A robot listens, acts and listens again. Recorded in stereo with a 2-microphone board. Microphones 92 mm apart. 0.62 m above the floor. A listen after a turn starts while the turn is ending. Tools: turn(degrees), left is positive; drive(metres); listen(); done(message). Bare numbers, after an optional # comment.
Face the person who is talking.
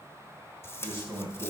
turn(-90)
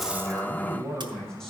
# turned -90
done("Facing the man speaking.")